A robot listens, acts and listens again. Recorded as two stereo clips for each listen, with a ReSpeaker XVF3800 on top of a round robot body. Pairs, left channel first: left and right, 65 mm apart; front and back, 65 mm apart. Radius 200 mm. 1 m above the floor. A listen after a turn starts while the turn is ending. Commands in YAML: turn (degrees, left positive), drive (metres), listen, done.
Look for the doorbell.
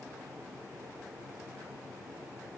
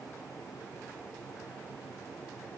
listen: true
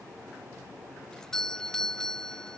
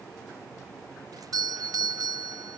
turn: 170
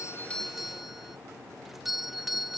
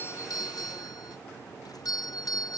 done: "Found it: a doorbell, straight ahead."